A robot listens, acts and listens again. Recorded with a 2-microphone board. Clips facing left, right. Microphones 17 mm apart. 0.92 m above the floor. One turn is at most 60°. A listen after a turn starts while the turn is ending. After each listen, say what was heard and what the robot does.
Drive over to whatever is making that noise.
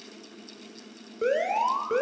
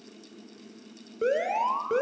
Turn 30° left.
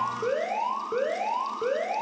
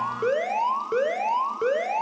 So it is at 30° right. Turn 30° right.
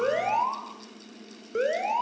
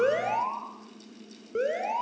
The alarm is now 10° left. Turn 10° left.
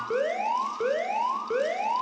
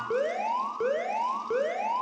Drive 1.0 m forward.
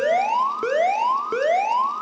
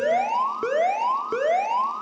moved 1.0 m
The alarm is now 10° left. Turn 10° left.
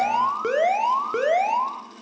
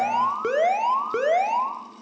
Drive 1.0 m forward.
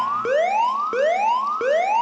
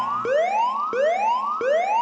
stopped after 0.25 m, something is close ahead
Arrived at the alarm, straight ahead.